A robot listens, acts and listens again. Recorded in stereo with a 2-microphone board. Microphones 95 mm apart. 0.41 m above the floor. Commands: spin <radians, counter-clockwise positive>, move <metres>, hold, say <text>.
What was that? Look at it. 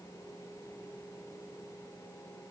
hold
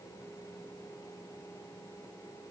hold
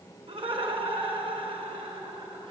spin -1.13
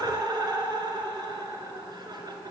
spin -0.79
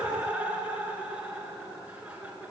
spin -0.26
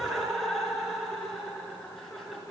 say Found it: laughter, straight ahead.